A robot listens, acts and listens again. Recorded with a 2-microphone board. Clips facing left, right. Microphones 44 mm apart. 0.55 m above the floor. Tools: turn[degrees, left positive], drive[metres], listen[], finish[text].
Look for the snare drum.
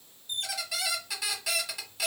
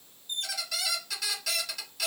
Action: listen[]
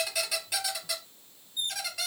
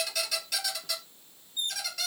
Action: listen[]
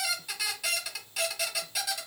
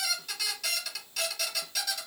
Action: finish[I can't make out a snare drum to turn to.]